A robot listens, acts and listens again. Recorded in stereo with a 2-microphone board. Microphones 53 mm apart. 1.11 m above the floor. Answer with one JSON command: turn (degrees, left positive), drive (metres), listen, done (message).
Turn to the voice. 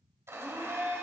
{"listen": true}
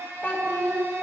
{"turn": 40}
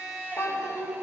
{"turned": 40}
{"turn": 105}
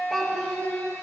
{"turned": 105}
{"done": "Facing the child speaking, 1 to 2 m away."}